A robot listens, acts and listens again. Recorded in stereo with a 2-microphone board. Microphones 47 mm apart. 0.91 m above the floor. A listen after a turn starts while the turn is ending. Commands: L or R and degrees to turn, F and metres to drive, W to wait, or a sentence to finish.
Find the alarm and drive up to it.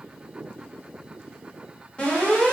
L30
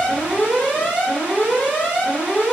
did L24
L120
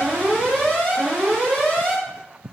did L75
L45
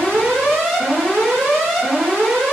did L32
L10
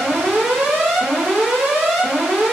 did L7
F1.0
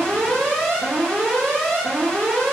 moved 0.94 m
L15
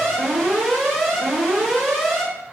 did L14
F1.0
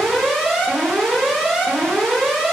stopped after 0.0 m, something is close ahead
I am next to the alarm.